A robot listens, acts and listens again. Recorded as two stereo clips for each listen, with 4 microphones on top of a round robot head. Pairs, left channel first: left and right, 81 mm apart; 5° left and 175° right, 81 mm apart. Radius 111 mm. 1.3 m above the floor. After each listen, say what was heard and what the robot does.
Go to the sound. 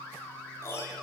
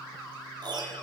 The piano: 155° left. Turn 155° left.
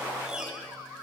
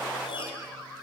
The piano is now 10° right. Turn 10° right.
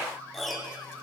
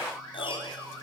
Drive 1.0 m forward.
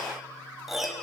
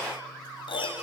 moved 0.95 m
Drive 1.0 m forward.
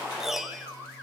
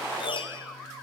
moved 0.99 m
Drive 1.0 m forward.
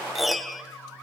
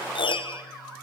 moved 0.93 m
Drive 1.0 m forward.
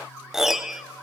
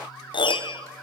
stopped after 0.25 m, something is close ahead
Arrived at the piano, straight ahead.